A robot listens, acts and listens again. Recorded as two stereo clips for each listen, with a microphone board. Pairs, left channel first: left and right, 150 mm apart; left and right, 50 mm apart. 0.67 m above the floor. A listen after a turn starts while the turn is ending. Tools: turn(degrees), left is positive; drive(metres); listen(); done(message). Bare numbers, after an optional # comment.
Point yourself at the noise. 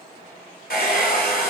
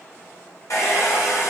turn(90)
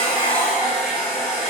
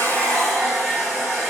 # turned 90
done("Facing the hair dryer.")